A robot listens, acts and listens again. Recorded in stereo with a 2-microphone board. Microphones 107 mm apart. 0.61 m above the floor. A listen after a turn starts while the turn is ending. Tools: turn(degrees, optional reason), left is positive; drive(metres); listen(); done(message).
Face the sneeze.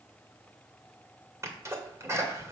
turn(degrees=-30, reason="The sneeze: about 30° right or 150° right.")
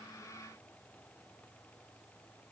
listen()
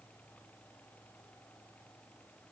done("I heard a sneeze, but can't make it out now. It was about straight ahead or 120° right.")